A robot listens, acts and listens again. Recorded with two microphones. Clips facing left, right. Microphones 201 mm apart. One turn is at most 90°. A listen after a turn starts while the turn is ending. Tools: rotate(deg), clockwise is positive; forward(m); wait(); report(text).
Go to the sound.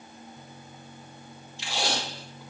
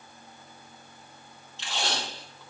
rotate(-30)
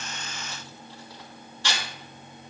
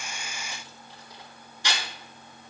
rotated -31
rotate(15)
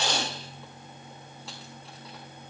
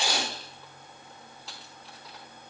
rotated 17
forward(1.0)
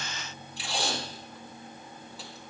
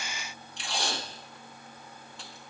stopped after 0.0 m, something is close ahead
report("Something is in my way. I am facing the tape being pulled but have not reached it.")